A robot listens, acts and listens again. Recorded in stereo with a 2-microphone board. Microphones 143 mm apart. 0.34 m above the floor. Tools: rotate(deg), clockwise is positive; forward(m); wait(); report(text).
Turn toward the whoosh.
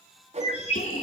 rotate(50)
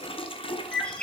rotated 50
wait()
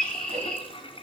wait()
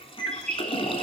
report("I heard a whoosh, but can't make it out now. It was about straight ahead or 80° right.")